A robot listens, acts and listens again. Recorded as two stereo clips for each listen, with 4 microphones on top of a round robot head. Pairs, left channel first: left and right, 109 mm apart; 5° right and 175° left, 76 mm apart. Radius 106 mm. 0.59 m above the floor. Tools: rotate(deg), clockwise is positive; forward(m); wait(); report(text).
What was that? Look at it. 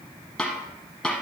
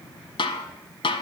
report("Found it: a snare drum, straight ahead, under 1 m away.")